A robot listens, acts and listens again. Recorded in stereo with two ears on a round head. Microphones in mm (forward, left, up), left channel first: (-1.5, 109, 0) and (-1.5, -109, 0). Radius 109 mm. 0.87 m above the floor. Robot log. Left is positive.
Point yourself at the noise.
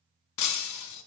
cmd yaw +90
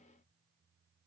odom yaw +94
end: I heard breaking glass from this way, but can't make it out now.